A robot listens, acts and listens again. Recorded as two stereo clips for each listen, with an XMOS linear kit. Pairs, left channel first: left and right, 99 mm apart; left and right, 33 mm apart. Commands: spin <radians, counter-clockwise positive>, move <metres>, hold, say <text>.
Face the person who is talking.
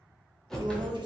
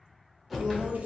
spin -0.87
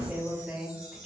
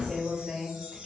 spin -0.26
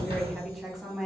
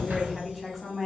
say Found it: a woman speaking, straight ahead, 1 to 2 m away.